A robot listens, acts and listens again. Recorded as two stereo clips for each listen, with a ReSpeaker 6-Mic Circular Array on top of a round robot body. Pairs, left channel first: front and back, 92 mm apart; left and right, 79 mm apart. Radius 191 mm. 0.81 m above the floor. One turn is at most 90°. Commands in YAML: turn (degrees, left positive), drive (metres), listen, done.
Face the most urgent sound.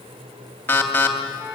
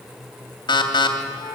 turn: 70
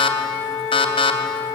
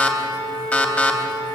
turn: 20
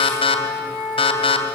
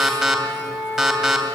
done: "Facing the alarm, 2 to 4 m away."